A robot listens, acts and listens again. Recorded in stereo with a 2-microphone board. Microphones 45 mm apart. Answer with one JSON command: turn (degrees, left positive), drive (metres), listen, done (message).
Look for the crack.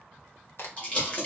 {"turn": 55}
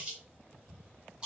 {"listen": true}
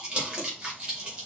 {"done": "I heard a crack, but can't make it out now. It was about straight ahead or 70° left."}